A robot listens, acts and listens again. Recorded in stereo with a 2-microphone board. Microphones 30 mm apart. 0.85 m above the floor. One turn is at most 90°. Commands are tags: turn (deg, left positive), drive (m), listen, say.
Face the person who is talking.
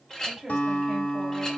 <turn deg="-30"/>
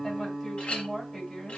<turn deg="20"/>
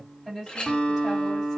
<say>Found it: a woman speaking, straight ahead.</say>